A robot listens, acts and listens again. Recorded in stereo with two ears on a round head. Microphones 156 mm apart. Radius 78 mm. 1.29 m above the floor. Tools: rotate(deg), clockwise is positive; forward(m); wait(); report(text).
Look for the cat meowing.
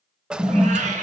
rotate(45)
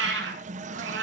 rotate(75)
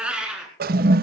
report("Facing the cat meowing.")